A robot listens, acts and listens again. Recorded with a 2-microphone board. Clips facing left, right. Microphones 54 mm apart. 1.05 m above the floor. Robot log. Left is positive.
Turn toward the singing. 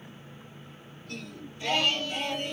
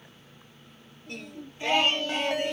note: The singing: about 40° right or 140° right.
cmd yaw -40
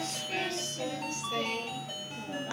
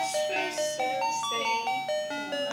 note: So it is at 25° right.
cmd yaw -25
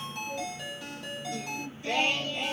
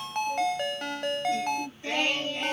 note: The singing is now 30° right.
cmd yaw -30
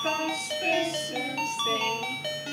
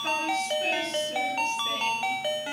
end: Facing the singing, 2 to 4 m away.